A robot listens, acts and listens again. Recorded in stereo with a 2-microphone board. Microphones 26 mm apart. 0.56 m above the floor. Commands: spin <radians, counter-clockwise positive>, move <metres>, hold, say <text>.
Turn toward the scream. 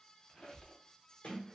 hold
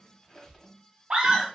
spin -0.70
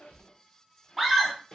say Found it: a scream, straight ahead.